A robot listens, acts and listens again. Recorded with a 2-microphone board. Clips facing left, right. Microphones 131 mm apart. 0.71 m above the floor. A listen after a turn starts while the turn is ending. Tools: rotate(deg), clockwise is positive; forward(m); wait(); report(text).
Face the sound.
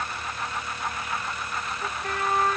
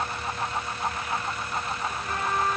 rotate(-70)
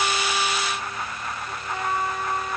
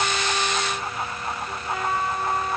report("Found it: a trumpet, straight ahead, over 4 m away.")